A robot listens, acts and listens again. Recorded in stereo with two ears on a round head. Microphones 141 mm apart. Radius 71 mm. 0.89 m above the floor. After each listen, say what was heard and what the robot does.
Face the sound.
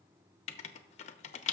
The writing: about 45° left or 135° left. Turn 45° left.
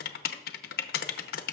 So it is at 85° left. Turn 85° left.
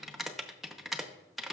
Facing the writing.